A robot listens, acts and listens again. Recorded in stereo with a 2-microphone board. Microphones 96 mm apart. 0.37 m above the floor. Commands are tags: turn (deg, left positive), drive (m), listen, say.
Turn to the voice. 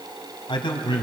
<turn deg="60"/>
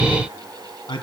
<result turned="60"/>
<turn deg="55"/>
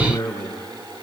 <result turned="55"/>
<turn deg="30"/>
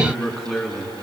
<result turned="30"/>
<say>Found it: a man speaking, straight ahead.</say>